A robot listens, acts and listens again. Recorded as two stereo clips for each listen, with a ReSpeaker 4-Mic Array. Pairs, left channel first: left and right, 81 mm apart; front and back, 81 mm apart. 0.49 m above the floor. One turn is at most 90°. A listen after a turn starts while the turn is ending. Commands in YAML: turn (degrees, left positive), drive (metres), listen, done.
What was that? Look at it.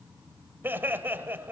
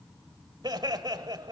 turn: -90
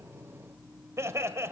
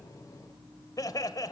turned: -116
turn: -35
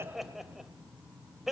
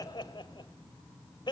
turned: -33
done: "Found it: laughter, straight ahead."